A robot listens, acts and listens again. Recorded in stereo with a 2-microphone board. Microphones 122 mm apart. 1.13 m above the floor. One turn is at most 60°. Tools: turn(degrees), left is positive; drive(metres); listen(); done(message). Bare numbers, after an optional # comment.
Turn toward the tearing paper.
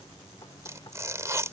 # The tearing paper: about 25° right or 155° right.
turn(-25)
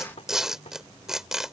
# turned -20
done("Found it: tearing paper, straight ahead.")